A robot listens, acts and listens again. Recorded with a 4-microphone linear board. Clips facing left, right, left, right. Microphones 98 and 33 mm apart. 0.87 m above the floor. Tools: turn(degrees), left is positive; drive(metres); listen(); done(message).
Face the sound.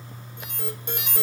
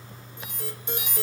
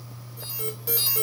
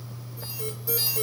turn(degrees=55)
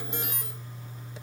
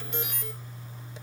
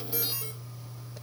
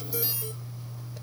turn(degrees=40)
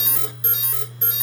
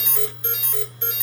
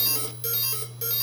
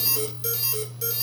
turn(degrees=10)
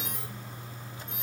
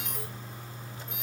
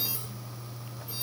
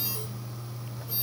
done("Facing the alarm.")